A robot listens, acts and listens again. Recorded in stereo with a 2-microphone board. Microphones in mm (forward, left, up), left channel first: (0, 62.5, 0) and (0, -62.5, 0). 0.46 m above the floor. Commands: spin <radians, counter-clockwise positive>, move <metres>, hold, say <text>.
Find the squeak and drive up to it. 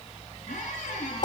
spin 1.13
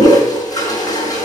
hold
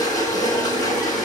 hold
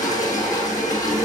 say I heard a squeak, but can't make it out now. It was about straight ahead or 50° left. I did not reach it.